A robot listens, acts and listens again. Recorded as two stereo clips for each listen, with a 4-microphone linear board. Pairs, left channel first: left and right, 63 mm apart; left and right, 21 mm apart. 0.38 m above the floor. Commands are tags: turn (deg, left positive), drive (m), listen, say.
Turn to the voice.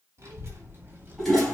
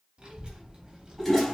<turn deg="-30"/>
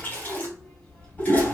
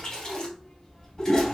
<turn deg="30"/>
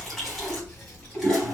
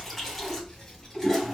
<turn deg="20"/>
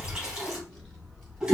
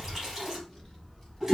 <turn deg="15"/>
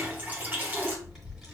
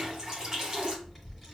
<say>Facing the child speaking.</say>